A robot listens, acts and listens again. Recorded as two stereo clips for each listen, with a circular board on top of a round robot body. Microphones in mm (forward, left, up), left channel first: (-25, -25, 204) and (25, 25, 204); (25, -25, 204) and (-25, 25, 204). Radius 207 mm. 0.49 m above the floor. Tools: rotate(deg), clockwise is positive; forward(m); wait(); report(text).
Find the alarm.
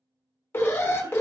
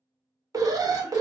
rotate(-170)
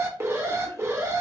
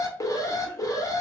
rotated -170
report("Facing the alarm.")